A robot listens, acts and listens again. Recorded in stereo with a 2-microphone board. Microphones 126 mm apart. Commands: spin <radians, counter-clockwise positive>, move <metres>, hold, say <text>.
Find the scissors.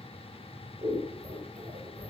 spin -1.13
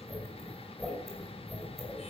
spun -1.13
say Found it: scissors, straight ahead, over 4 m away.